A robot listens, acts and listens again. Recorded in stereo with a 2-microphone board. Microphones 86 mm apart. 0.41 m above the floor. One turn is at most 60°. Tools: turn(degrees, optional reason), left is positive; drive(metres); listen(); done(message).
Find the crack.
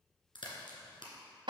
turn(degrees=60, reason="The crack: about 70° left or 110° left.")
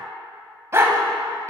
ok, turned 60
listen()
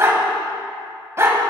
done("I heard a crack, but can't make it out now. It was about 10° left or 50° left.")